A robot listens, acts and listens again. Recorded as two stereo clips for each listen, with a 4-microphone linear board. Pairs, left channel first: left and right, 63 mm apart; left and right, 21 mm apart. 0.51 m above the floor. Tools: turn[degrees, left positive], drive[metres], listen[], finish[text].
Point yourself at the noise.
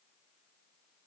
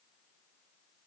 Action: listen[]
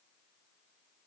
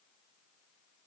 Action: listen[]
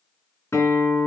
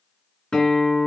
Thought: The guitar: about 50° left or 130° left.
Action: turn[50]
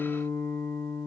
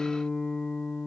Thought: So it is at 80° left.
Action: turn[80]
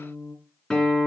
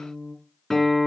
Thought: The guitar is now 15° left.
Action: turn[15]
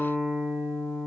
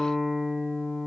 Action: finish[Facing the guitar.]